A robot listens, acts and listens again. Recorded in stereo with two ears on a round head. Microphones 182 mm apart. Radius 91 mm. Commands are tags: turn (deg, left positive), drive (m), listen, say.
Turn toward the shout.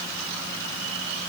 <listen/>
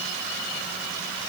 <listen/>
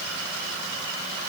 <say>I can't make out a shout.</say>